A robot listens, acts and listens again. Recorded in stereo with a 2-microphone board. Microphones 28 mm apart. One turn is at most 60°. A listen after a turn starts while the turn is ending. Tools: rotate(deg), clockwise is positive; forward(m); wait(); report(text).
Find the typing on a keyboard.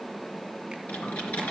rotate(-60)
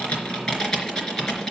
rotate(-25)
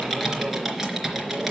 report("Found it: typing on a keyboard, straight ahead, 2 to 4 m away.")